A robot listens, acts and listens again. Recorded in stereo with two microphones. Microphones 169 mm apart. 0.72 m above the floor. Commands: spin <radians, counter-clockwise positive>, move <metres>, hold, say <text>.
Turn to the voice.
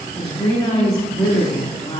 spin 0.52
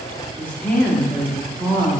spin 0.17
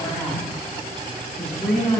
say Found it: a woman speaking, straight ahead.